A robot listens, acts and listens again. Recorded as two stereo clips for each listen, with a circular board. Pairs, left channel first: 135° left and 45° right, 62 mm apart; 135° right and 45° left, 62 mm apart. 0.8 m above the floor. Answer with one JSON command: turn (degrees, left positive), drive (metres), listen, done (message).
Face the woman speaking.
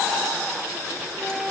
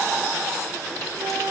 {"listen": true}
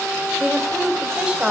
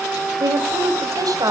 {"turn": 30}
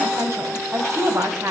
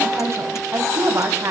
{"done": "Facing the woman speaking, over 4 m away."}